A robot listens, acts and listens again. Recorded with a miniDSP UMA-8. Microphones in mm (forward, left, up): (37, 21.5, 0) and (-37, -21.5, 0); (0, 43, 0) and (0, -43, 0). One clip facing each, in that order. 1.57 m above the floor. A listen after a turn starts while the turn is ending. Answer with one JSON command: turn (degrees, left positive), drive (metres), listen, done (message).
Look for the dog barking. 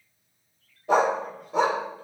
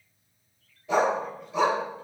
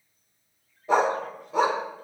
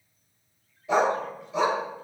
{"turn": 60}
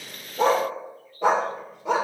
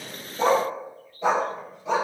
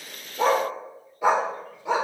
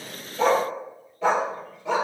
{"turn": 20}
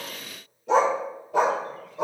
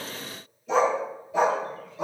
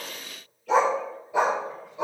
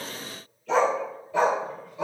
{"turn": 25}
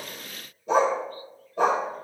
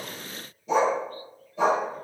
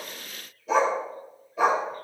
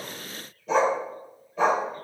{"done": "Found it: a dog barking, straight ahead, 2 to 4 m away."}